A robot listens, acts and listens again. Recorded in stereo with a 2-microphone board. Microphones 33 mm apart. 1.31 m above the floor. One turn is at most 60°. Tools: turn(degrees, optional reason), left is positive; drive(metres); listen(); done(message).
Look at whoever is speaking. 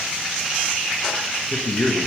turn(degrees=55, reason="The man speaking: about 55° left or 125° left.")
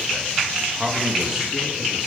turn(degrees=-10, reason="So it is at 10° right.")
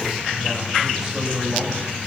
turn(degrees=-10, reason="The man speaking is now 10° right.")
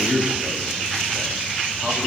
done("Found it: a man speaking, straight ahead.")